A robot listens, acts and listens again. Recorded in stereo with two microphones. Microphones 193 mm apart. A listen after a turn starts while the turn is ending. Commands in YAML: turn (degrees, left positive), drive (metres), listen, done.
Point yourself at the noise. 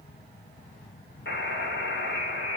turn: 65
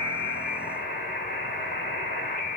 turn: 50
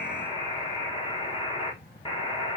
turn: 25
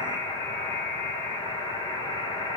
turn: 20
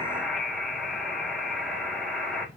done: "Facing the buzzer, 1 to 2 m away."